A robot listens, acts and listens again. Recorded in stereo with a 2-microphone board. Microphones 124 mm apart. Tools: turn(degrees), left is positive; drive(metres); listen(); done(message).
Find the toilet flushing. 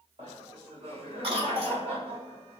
listen()
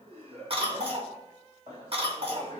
listen()
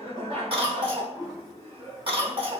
turn(degrees=-25)
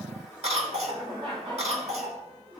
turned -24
done("Facing the toilet flushing.")